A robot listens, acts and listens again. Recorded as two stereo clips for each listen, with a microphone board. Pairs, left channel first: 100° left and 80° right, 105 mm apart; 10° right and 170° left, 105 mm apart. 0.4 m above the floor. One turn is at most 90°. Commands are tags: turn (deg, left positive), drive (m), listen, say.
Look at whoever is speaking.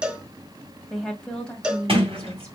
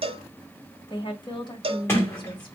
<turn deg="20"/>
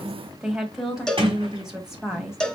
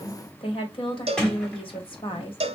<say>Facing the woman speaking.</say>